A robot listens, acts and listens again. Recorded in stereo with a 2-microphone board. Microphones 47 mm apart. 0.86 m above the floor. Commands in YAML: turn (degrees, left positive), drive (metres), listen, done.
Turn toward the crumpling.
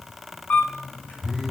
listen: true
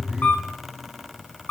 listen: true
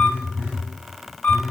done: "I can't make out crumpling, only a camera shutter and a phone buzzing."